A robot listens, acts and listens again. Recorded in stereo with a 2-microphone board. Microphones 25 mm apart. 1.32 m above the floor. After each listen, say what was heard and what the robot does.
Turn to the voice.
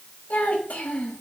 The child speaking: about 70° left or 110° left. Turn 70° left.
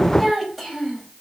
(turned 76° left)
Found it: a child speaking, straight ahead, over 4 m away.